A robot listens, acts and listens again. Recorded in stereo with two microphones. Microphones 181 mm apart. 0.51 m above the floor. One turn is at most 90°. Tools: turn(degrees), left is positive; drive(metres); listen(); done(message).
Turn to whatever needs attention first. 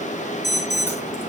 turn(degrees=70)
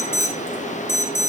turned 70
turn(degrees=15)
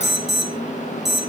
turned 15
done("Facing the alarm.")